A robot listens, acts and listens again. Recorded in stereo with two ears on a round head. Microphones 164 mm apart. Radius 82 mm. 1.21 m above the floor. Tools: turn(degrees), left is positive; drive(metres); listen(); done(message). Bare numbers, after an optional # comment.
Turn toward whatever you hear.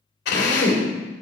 # The drill: about 65° left or 115° left.
turn(65)
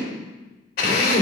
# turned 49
# So it is at 60° left.
turn(60)
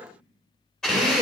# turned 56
done("Found it: a drill, straight ahead, 2 to 4 m away.")